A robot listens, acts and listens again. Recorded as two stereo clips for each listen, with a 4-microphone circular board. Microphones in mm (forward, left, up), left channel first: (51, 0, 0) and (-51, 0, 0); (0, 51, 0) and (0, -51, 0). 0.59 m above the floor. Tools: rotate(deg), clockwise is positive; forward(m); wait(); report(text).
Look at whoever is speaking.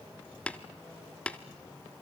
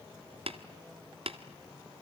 wait()
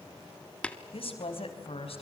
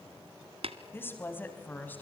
rotate(-20)
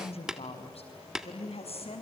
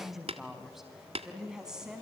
report("Facing the woman speaking, over 4 m away.")